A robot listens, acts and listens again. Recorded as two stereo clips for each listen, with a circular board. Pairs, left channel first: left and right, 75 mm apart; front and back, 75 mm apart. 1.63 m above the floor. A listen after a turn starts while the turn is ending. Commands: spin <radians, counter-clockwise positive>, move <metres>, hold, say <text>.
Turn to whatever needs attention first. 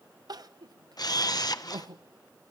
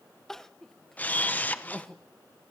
spin -1.40
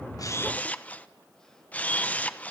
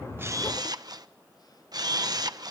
hold
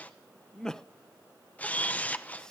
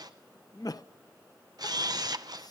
spin 0.17
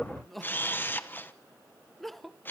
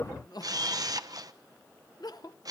say Facing the crying, under 1 m away.